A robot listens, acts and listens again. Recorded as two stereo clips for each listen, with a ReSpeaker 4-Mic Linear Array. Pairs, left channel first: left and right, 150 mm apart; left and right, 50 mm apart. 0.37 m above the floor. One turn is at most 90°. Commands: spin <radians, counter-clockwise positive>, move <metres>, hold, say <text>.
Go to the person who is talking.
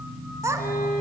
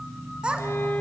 spin -0.35
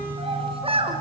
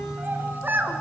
spin -1.57
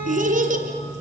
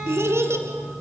spin -1.13
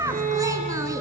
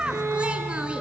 spin -0.35
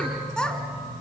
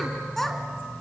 move 1.0
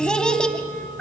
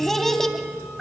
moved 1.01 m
move 1.0
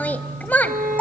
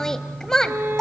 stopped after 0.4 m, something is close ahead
spin 0.17
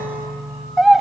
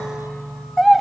say I am next to the child speaking.